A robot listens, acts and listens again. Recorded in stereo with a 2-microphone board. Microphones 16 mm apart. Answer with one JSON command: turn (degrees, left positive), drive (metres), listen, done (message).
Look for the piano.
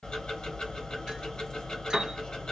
{"turn": -25}
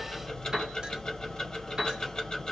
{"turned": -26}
{"turn": -130}
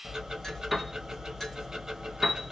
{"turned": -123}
{"done": "Facing the piano."}